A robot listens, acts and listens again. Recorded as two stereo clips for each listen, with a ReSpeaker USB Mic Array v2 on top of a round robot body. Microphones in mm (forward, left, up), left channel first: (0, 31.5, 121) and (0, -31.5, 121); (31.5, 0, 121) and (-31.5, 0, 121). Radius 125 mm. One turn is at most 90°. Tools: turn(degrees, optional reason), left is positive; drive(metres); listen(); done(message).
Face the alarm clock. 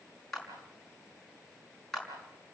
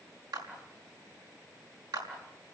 listen()
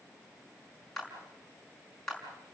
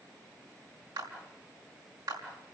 listen()
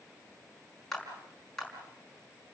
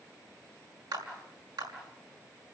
done("I can't make out an alarm clock, only a clap.")